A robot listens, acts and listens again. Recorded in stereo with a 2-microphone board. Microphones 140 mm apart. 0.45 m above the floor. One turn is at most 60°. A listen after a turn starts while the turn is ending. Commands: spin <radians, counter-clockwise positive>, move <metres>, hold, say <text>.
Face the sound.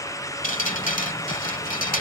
spin 1.05
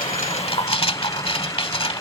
spin 0.79
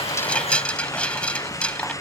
spin 0.17
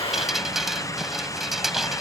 say Facing the dripping.